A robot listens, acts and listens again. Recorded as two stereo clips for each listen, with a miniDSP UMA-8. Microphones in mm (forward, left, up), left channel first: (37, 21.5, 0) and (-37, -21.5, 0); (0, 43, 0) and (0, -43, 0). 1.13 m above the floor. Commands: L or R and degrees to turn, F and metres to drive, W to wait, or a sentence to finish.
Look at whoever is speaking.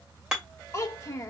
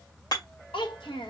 L85
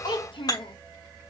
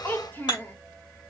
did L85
L25
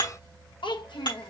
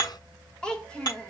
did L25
L10
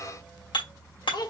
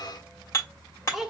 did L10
Facing the child speaking.